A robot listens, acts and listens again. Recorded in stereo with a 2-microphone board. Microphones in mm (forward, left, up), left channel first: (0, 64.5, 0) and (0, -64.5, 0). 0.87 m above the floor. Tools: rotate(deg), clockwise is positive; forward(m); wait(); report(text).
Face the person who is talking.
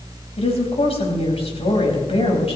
rotate(-55)
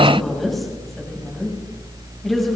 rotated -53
report("Found it: a woman speaking, straight ahead.")